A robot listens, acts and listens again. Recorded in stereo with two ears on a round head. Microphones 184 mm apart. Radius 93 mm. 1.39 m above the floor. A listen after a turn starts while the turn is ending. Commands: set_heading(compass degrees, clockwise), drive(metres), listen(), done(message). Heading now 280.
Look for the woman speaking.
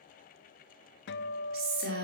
set_heading(325)
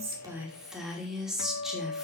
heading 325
done("Found it: a woman speaking, straight ahead, 2 to 4 m away.")